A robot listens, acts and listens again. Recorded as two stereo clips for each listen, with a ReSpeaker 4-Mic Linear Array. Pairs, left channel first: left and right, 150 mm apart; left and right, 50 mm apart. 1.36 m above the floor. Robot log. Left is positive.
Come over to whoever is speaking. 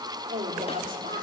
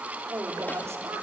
note: The woman speaking: about 70° right or 110° right.
cmd yaw -70
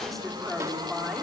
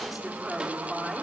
cmd fwd 1.0
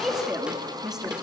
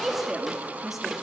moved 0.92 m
cmd fwd 1.0
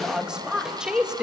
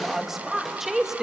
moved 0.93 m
cmd fwd 1.0
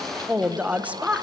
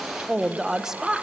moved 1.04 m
note: The woman speaking is now 10° right.
cmd yaw -10
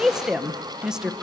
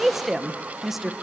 cmd fwd 1.0
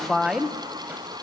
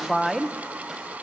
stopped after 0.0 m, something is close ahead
end: I am next to the woman speaking.